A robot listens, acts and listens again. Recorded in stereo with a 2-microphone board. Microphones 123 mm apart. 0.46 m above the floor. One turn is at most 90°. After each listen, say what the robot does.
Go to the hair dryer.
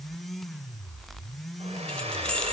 Turn 55° right.
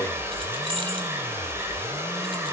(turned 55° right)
Turn 25° right.
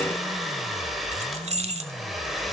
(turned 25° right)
Drive 1.0 m forward.
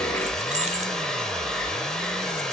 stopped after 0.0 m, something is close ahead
Something is in my way. I am facing the hair dryer but have not reached it.